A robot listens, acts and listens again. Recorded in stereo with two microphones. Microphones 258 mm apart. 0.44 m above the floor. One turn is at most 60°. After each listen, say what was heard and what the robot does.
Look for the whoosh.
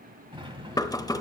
Keep listening.
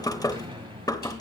Keep listening.
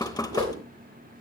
The whoosh: about 65° right or 115° right. Turn 60° right.
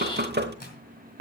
Keep listening.
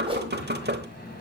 So it is at 25° right. Turn 25° right.
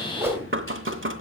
The whoosh is now 10° right. Turn 10° right.
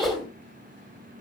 Found it: a whoosh, straight ahead.